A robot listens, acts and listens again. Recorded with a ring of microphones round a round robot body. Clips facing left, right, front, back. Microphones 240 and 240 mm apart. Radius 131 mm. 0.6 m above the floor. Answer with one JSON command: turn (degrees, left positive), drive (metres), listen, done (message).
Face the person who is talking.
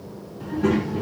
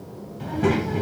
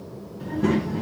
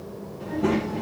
{"turn": -70}
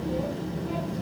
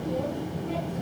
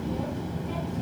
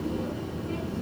{"done": "Found it: a child speaking, straight ahead."}